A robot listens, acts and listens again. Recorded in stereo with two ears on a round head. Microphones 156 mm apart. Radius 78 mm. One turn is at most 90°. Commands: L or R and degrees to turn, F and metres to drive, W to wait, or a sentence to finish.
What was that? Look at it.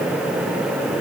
W
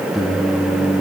L30
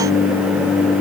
L90
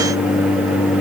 L35
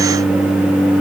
Found it: singing, straight ahead.